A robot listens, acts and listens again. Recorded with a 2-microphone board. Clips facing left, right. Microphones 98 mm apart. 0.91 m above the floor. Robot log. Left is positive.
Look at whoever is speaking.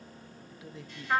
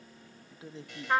note: The man speaking: about 30° right or 150° right.
cmd yaw -30
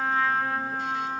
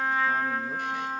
cmd idle
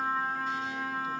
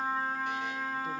cmd idle
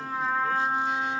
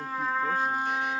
end: I heard a man speaking, but can't make it out now. It was about straight ahead or 120° right.